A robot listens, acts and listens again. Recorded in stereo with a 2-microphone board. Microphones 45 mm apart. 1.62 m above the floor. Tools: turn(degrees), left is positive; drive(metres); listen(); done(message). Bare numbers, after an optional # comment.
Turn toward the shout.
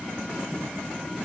listen()
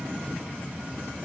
listen()
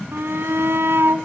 # The shout: about 70° right or 110° right.
turn(-70)
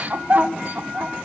# So it is at 40° right.
turn(-40)
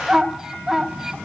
# The shout is now 15° right.
turn(-15)
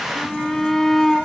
done("Facing the shout.")